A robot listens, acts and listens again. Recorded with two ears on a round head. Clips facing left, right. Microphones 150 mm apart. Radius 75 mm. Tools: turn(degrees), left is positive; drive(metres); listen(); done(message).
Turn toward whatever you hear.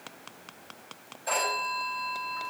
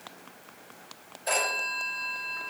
turn(degrees=-25)
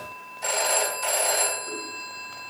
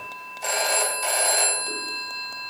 done("Found it: a phone ringing, straight ahead, 2 to 4 m away.")